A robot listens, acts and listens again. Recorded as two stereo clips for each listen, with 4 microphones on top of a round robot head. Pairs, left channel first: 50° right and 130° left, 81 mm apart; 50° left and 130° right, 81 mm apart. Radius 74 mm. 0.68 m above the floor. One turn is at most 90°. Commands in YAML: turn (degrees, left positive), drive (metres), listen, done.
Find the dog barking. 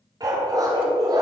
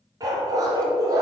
turn: 90
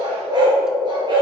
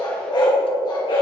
turn: 90
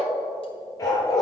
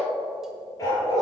done: "Facing the dog barking."